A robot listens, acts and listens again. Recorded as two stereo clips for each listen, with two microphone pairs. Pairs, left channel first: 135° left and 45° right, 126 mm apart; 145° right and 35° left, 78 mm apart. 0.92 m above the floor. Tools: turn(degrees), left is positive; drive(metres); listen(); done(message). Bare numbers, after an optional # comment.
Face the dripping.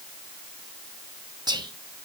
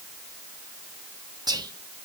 listen()
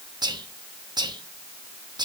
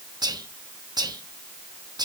listen()
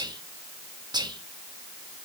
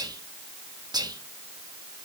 done("I can't make out dripping, only whispering.")